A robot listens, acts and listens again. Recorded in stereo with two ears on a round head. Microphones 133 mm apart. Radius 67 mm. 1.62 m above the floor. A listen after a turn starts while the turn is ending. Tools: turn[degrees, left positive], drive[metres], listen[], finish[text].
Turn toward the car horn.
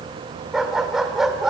Action: listen[]
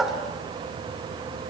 Action: listen[]
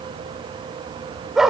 Action: finish[I can't make out a car horn to turn to.]